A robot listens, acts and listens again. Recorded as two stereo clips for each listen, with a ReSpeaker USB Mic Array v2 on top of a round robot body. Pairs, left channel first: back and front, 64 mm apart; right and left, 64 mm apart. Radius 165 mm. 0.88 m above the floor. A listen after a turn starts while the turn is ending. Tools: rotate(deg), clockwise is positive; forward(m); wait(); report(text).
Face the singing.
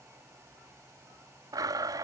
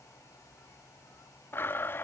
wait()
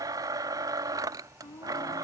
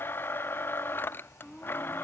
rotate(175)
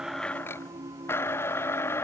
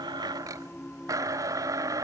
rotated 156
rotate(10)
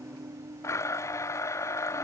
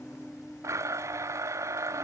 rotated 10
report("Facing the singing.")